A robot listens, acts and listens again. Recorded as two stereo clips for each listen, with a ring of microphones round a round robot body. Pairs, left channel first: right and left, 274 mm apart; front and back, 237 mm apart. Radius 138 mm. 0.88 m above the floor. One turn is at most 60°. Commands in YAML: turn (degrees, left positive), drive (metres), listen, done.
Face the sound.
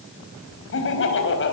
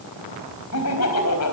turn: -40
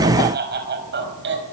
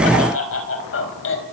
turn: 35
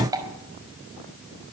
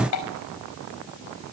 turn: 10
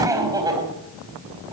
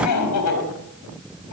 turn: 15
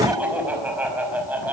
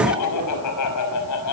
done: "Facing the laughter, over 4 m away."